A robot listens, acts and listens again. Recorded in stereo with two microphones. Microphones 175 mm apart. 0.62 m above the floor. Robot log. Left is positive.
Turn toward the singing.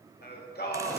note: The singing: about 65° left or 115° left.
cmd yaw +65
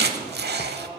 note: So it is at 30° left.
cmd yaw +30
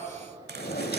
cmd idle
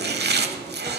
cmd idle
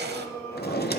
note: The singing is now 20° left.
cmd yaw +20
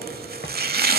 cmd idle
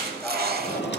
cmd idle
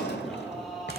end: Found it: singing, straight ahead.